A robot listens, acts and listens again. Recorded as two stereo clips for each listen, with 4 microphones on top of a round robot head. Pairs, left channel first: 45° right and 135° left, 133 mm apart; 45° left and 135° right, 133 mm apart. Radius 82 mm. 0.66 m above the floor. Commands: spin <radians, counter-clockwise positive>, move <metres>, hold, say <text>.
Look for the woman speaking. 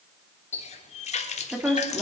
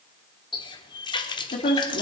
spin 0.87
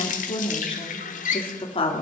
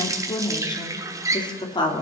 say Facing the woman speaking, 2 to 4 m away.